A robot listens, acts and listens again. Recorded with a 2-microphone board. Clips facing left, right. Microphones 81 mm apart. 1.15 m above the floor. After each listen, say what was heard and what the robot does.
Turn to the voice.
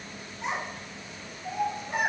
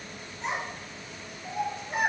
Turn 30° left.
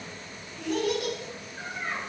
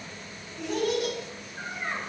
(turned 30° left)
So it is at 20° right. Turn 20° right.
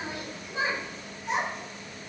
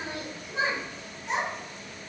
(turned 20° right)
Facing the child speaking, 1 to 2 m away.